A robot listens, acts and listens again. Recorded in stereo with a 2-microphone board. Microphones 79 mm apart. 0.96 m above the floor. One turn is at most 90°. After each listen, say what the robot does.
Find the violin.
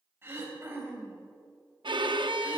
Turn 70° right.
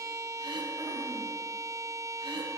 Turn 40° right.
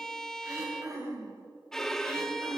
Found it: a violin, straight ahead.